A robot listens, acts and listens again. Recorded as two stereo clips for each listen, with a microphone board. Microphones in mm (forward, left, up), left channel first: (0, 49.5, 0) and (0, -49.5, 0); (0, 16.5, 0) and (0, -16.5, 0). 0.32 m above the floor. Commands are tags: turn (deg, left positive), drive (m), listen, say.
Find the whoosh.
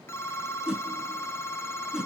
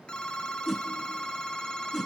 <turn deg="-30"/>
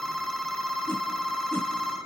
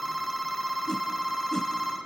<turn deg="20"/>
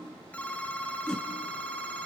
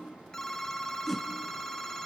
<turn deg="10"/>
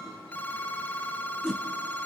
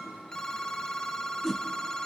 <say>Facing the whoosh.</say>